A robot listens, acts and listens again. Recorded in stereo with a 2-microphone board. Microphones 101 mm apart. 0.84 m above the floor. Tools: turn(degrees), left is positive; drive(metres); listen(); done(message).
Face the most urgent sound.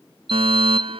turn(degrees=-65)
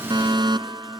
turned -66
turn(degrees=-45)
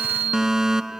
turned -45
done("Facing the fire alarm.")